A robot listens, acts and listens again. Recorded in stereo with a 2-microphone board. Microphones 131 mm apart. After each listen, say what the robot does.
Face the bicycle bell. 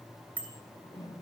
Turn 30° left.
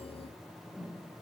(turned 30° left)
Keep listening.
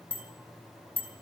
Turn 135° left.
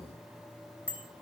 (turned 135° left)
Turn 15° right.
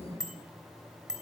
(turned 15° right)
Facing the bicycle bell, 2 to 4 m away.